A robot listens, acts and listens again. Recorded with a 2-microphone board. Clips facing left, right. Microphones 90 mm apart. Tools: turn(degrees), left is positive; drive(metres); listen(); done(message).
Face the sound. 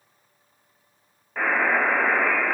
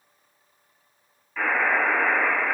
turn(degrees=55)
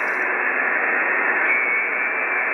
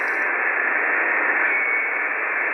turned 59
turn(degrees=40)
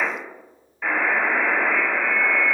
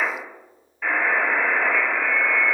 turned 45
done("Facing the buzzer, 1 to 2 m away.")